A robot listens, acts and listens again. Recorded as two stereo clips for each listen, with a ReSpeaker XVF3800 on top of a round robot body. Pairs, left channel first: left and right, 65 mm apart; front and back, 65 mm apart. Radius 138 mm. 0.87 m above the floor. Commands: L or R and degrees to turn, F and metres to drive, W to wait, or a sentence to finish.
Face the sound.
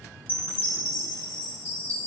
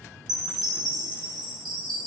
L155
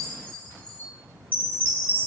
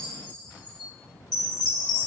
L20
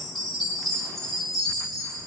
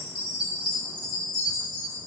Facing the chime.